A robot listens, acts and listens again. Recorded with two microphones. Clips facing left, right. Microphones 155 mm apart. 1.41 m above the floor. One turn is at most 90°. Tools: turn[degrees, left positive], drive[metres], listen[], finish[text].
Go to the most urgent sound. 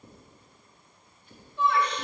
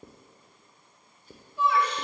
Action: turn[-30]
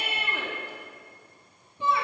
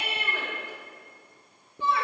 Thought: So it is at 20° left.
Action: turn[20]
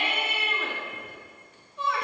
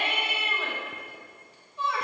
Action: drive[1.0]
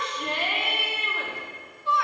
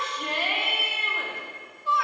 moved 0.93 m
Action: drive[1.0]
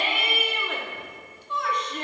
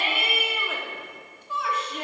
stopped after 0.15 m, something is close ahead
Action: finish[Arrived at the shout, straight ahead.]